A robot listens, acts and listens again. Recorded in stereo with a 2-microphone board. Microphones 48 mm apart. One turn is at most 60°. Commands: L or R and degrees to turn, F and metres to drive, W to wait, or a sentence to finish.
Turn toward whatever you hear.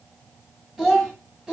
R20
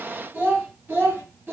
R60
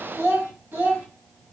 R45
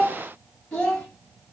L10
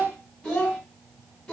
L10
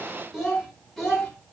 Facing the child speaking, 2 to 4 m away.